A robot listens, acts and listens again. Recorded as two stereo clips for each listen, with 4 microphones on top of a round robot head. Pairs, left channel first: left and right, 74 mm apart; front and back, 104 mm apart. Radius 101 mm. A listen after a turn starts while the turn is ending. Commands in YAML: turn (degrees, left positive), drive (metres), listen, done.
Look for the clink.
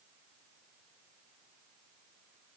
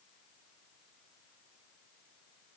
listen: true
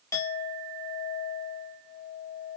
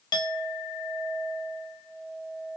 turn: 45
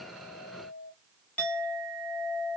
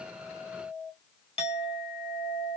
turn: 20
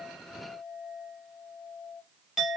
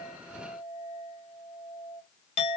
done: "Facing the clink, 1 to 2 m away."